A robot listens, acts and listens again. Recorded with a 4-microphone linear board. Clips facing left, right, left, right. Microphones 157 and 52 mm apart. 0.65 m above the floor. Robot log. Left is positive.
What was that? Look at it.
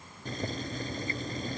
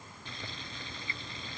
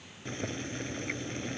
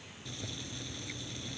note: The boiling: about 50° left or 130° left.
cmd yaw +50
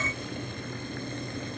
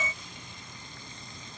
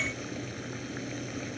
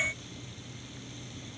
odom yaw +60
note: So it is at 70° left.
cmd yaw +70
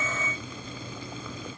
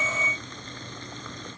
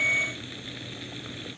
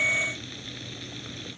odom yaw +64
note: The boiling is now 10° left.
cmd yaw +10
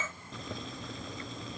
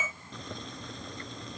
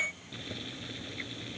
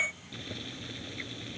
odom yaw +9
end: Facing the boiling.